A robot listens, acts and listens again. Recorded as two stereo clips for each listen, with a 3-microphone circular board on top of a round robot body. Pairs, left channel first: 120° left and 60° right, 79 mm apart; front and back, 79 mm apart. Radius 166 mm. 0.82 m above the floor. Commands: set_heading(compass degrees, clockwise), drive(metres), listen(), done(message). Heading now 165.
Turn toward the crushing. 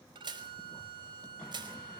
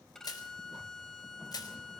set_heading(200)
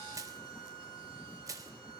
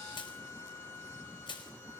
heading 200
set_heading(215)
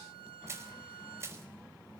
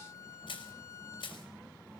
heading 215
done("Facing the crushing, over 4 m away.")